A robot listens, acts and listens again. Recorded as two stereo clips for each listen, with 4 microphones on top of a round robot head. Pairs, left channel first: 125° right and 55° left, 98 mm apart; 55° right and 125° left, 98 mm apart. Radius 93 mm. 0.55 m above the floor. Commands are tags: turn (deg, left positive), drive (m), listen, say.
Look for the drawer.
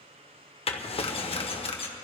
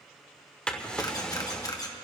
<turn deg="-135"/>
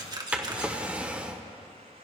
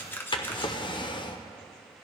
<turn deg="-20"/>
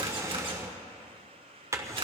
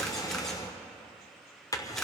<say>Facing the drawer, 1 to 2 m away.</say>